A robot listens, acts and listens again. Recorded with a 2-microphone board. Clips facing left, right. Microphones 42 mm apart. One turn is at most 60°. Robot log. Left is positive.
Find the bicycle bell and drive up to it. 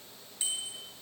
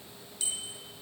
note: The bicycle bell: about 20° left or 160° left.
cmd yaw +20
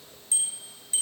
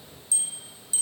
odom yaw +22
note: So it is at 140° left.
cmd yaw +60
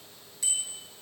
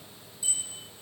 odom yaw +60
note: The bicycle bell is now 80° left.
cmd yaw +60
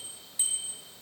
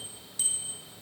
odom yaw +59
note: The bicycle bell is now 20° left.
cmd yaw +20
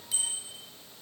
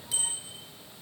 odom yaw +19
cmd fwd 1.0
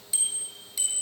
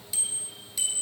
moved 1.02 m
cmd fwd 1.0
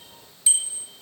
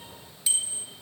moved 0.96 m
cmd fwd 1.0
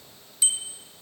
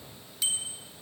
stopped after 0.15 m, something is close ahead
end: I am next to the bicycle bell.